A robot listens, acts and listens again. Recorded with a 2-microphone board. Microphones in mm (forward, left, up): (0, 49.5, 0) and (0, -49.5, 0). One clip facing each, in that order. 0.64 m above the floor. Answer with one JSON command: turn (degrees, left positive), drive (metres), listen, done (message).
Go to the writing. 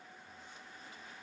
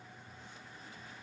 {"listen": true}
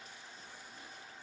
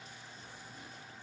{"listen": true}
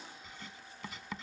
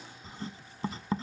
{"turn": -35}
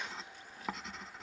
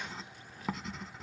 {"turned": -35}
{"drive": 1.0}
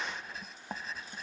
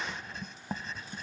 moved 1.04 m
{"drive": 1.0}
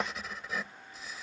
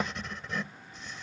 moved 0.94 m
{"drive": 1.0}
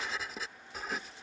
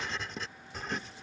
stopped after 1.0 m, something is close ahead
{"done": "I am next to the writing."}